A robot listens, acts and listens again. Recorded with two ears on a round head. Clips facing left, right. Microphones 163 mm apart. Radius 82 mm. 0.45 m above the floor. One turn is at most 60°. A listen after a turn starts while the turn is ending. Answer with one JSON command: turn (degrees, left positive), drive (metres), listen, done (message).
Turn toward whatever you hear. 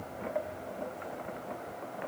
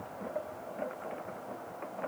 {"listen": true}
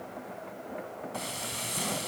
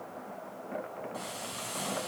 {"turn": 35}
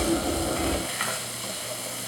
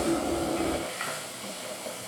{"turn": 60}
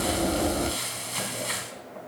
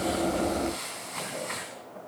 {"turn": 45}
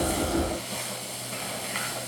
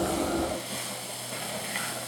{"done": "Found it: frying, straight ahead."}